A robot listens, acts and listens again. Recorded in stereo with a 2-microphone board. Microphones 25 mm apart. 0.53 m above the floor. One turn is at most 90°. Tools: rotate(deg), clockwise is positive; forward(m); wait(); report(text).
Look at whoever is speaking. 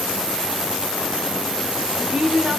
rotate(45)
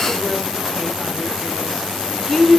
report("Found it: a woman speaking, straight ahead.")